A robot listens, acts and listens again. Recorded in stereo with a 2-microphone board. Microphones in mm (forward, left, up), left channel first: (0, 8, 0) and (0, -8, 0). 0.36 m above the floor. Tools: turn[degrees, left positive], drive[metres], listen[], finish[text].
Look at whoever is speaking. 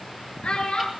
Action: turn[90]
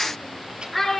Action: finish[Facing the child speaking.]